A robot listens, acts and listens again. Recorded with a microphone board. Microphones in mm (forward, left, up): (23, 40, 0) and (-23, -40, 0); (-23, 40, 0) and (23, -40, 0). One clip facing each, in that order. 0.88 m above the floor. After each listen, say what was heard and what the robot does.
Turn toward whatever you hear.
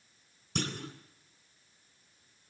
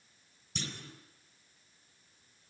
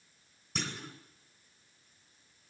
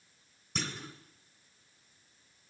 The clunk: 30° left. Turn 30° left.
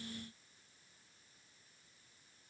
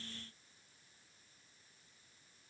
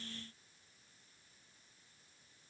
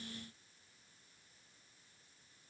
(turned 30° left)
I heard a clunk from this way, but can't make it out now.